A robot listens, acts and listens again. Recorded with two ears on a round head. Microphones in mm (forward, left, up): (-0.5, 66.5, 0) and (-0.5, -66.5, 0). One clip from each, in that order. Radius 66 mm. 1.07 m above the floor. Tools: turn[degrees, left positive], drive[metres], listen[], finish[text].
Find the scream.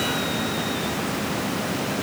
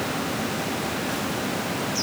Action: listen[]
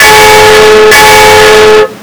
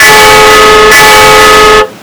Action: listen[]
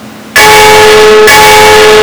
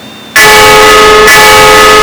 Action: finish[I can't make out a scream, only a bell.]